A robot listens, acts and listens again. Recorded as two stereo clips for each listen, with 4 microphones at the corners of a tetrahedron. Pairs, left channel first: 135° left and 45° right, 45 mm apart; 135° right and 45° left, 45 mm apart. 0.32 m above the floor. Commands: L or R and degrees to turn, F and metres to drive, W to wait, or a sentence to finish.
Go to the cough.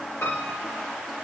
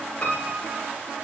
W
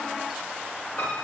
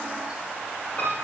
W
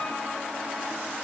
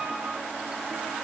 I can't make out a cough, only a piano.